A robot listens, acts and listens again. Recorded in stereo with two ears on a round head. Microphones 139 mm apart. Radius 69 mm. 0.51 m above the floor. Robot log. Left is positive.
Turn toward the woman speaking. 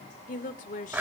note: The woman speaking: about 55° left or 125° left.
cmd yaw +55
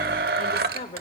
note: So it is at 50° left.
cmd yaw +50
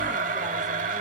cmd idle
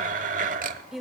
end: Facing the woman speaking, 1 to 2 m away.